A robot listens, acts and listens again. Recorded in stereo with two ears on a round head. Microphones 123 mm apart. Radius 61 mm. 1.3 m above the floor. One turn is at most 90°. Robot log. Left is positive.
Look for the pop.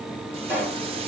cmd yaw -30
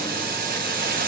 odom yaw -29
cmd idle
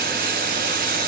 end: I heard a pop, but can't make it out now. It was about 15° left or 140° right.